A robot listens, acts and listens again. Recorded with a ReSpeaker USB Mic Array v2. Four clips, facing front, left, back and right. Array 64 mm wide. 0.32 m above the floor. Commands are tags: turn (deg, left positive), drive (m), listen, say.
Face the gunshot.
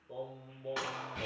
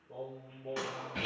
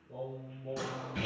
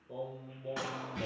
<say>Found it: a gunshot, straight ahead, 2 to 4 m away.</say>